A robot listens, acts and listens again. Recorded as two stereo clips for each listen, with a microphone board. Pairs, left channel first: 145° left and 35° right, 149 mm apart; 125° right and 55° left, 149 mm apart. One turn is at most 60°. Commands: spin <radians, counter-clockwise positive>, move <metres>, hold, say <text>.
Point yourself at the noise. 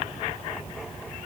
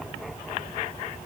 hold
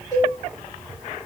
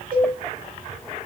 spin 1.05
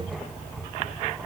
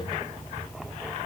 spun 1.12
spin 0.26
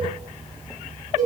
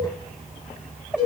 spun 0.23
say Found it: a cowbell, straight ahead.